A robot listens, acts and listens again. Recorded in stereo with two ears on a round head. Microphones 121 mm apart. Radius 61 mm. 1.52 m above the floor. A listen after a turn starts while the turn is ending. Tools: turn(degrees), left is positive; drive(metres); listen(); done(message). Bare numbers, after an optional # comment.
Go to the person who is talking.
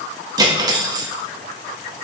listen()
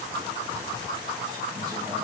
listen()
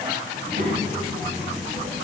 # The child speaking: about 65° right or 115° right.
turn(-65)
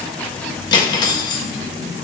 drive(1.0)
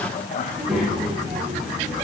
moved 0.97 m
drive(1.0)
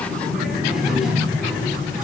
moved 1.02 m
drive(1.0)
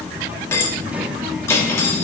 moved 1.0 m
# The child speaking is now 15° right.
turn(-15)
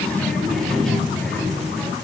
drive(1.0)
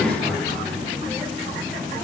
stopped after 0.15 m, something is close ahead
done("I am next to the child speaking.")